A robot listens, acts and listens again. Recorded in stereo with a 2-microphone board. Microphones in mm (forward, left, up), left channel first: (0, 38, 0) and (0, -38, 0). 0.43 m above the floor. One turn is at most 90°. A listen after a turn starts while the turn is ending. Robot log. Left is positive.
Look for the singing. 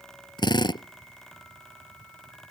cmd idle
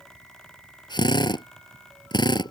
cmd idle
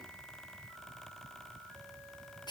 end: I can't make out singing to turn to.